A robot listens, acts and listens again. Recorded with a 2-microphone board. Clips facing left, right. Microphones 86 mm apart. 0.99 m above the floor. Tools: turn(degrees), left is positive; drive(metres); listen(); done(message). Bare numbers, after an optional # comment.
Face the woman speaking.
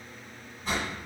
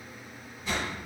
listen()
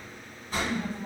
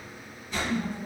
# The woman speaking: about 60° left or 120° left.
turn(60)
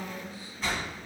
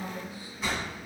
# So it is at 55° left.
turn(55)
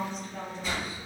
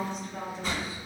# The woman speaking is now 10° right.
turn(-10)
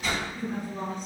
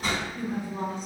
done("Found it: a woman speaking, straight ahead, over 4 m away.")